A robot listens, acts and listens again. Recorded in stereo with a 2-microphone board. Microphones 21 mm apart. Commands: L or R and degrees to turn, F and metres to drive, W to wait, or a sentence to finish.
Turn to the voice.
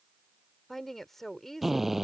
L30
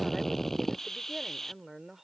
R15
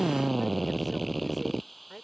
Found it: a woman speaking, straight ahead.